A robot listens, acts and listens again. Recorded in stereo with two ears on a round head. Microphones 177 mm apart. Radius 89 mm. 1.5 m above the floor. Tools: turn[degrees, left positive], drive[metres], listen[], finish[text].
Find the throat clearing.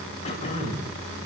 Thought: The throat clearing: about 35° left or 145° left.
Action: turn[35]
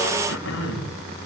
Thought: So it is at 110° left.
Action: turn[110]
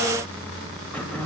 Action: finish[Found it: throat clearing, straight ahead.]